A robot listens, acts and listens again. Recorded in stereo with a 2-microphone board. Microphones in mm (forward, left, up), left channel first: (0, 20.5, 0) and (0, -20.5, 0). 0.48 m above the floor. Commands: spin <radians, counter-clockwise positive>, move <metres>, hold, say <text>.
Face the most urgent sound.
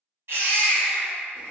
spin -1.57
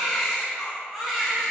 say Found it: a baby crying, straight ahead, 1 to 2 m away.